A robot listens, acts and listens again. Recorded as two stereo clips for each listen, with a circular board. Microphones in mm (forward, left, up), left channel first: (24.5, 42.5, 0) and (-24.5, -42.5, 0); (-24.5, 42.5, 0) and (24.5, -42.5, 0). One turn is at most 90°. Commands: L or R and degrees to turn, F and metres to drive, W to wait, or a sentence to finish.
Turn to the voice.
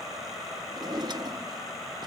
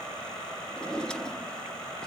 W
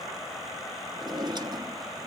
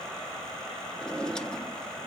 W
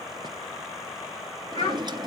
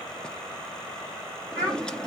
L45
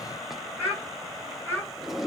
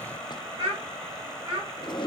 Facing the child speaking, over 4 m away.